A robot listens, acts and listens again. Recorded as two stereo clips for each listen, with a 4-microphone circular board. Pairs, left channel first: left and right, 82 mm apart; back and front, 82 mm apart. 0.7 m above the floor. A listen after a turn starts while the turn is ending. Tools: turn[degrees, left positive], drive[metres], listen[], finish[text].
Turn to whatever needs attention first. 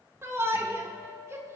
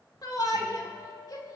Thought: The shout: 145° right.
Action: turn[-145]
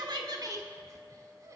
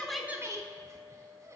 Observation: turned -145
Thought: The shout is now 45° right.
Action: turn[-45]
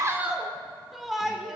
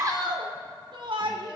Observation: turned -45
Action: finish[Facing the shout, 1 to 2 m away.]